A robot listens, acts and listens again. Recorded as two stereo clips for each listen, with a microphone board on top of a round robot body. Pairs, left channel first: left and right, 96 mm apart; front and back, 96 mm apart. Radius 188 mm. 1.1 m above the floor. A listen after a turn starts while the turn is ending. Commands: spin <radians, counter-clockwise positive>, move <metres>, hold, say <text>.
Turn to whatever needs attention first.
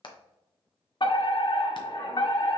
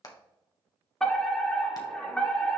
spin 1.48
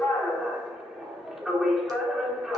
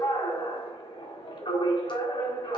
say Found it: a fire alarm, straight ahead, 2 to 4 m away.